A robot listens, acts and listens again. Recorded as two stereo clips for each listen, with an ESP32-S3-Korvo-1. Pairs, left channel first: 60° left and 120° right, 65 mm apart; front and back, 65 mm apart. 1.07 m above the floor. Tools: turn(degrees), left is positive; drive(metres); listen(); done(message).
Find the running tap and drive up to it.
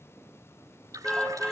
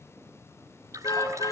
turn(degrees=-150)
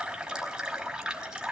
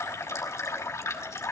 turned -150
turn(degrees=-45)
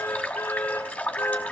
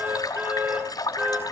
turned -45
turn(degrees=-10)
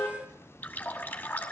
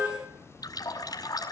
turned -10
drive(metres=1.0)
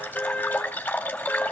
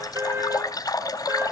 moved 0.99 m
drive(metres=1.0)
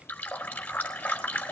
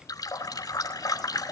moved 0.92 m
turn(degrees=-10)
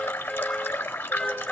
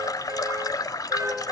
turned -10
drive(metres=1.0)
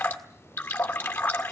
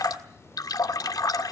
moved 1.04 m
drive(metres=1.0)
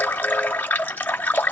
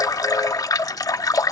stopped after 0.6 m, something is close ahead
done("Arrived at the running tap, straight ahead.")